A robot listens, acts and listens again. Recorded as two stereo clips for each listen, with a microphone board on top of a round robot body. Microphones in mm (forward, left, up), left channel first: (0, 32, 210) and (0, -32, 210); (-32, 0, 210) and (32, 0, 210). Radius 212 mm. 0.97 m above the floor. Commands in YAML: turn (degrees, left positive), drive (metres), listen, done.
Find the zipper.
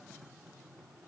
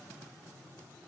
listen: true
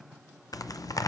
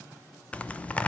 turn: 110
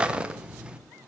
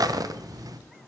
turn: -15
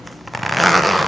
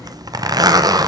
done: "Facing the zipper, under 1 m away."